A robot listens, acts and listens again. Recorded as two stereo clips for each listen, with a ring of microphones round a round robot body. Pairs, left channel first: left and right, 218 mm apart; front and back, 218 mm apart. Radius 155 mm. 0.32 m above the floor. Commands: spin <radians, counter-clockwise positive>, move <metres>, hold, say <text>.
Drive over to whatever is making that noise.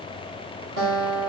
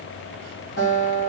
spin -1.05
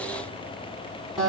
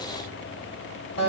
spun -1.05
move 1.0
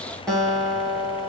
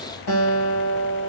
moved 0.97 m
move 1.0
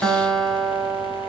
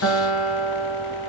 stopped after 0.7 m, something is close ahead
say Arrived at the guitar, straight ahead.